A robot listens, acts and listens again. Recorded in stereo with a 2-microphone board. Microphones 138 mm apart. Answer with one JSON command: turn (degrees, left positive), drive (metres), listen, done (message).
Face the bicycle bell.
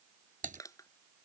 {"listen": true}
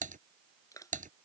{"listen": true}
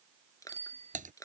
{"turn": -50}
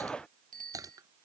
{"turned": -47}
{"turn": -80}
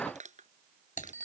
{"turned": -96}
{"turn": 15}
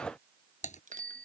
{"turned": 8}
{"turn": 10}
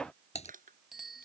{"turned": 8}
{"done": "Found it: a bicycle bell, straight ahead."}